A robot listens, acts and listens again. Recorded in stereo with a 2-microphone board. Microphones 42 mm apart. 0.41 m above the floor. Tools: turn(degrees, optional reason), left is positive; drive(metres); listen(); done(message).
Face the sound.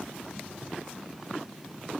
listen()
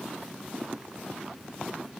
listen()
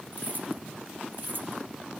turn(degrees=-55, reason="The keys jangling: about 55° right or 125° right.")
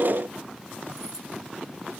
listen()
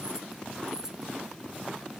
turn(degrees=-15, reason="So it is at 15° right.")
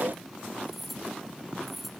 done("Facing the keys jangling.")